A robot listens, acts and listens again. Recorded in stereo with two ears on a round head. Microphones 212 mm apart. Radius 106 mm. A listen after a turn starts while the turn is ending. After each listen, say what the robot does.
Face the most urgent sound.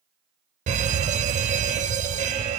Turn 30° right.
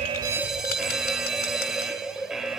Found it: an alarm, straight ahead.